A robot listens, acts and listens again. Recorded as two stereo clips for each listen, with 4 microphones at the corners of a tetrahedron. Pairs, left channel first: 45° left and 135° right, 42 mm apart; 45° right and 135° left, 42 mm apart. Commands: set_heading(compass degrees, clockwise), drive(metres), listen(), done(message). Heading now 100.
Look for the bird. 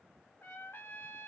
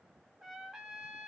listen()
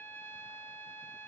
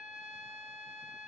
listen()
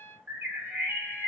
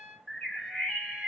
set_heading(220)
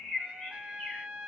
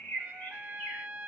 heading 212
set_heading(222)
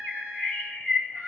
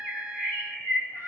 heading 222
done("Facing the bird, 2 to 4 m away.")